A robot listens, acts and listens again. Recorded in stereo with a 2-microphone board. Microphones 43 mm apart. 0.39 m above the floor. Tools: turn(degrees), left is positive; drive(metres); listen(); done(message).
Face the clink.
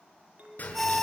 turn(degrees=-35)
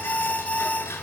listen()
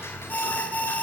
listen()
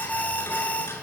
done("I heard a clink, but can't make it out now. It was about straight ahead or 110° right.")